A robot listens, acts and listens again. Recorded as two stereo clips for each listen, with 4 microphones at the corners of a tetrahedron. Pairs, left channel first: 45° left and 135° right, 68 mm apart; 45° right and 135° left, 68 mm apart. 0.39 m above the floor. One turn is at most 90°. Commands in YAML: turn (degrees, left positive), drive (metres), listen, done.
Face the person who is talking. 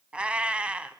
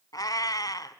listen: true
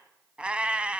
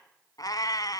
listen: true
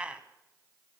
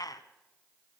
done: "I can't make out anyone speaking, only a cat meowing."